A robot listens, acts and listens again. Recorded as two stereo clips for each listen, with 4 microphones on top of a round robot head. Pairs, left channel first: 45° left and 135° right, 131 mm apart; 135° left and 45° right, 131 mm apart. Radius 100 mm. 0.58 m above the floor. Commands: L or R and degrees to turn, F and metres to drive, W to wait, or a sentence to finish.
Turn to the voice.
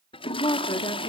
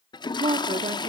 Found it: a woman speaking, straight ahead, 1 to 2 m away.